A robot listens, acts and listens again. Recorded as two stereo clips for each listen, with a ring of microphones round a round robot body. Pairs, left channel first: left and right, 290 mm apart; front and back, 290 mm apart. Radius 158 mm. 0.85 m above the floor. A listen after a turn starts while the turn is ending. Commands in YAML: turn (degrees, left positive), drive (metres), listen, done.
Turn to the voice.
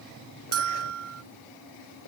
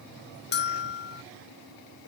listen: true
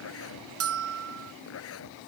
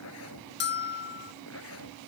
listen: true
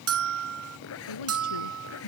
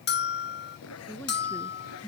turn: 85
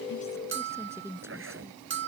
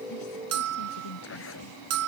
turn: -10
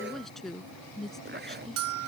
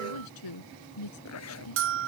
done: "Found it: a woman speaking, straight ahead."